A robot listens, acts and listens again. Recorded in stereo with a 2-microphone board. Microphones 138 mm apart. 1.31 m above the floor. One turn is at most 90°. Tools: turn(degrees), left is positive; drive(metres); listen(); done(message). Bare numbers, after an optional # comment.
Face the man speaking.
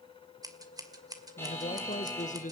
# The man speaking: about 65° left or 115° left.
turn(65)
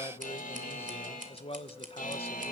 # So it is at 45° left.
turn(45)
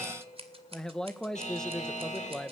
done("Facing the man speaking.")